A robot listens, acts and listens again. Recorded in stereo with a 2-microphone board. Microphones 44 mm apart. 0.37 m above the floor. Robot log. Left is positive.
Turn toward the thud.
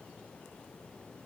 cmd idle
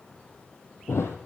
cmd yaw +90
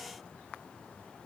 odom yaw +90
end: Facing where the thud came from. I can't hear it now.